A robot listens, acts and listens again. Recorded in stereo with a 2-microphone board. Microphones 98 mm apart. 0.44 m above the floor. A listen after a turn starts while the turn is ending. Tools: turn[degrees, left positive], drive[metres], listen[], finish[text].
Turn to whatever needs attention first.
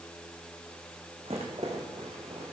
Action: listen[]
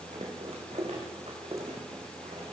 Action: listen[]
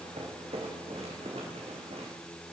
Action: finish[I can't make out anything urgent, only a rattle.]